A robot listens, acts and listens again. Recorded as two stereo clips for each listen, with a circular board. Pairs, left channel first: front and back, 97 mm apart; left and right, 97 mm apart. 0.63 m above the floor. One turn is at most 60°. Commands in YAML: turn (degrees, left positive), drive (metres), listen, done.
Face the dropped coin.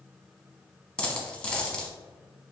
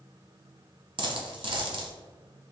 turn: -60
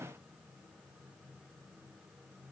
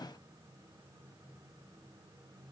turn: -20
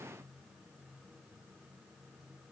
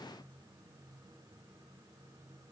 done: "I heard a dropped coin from this way, but can't make it out now."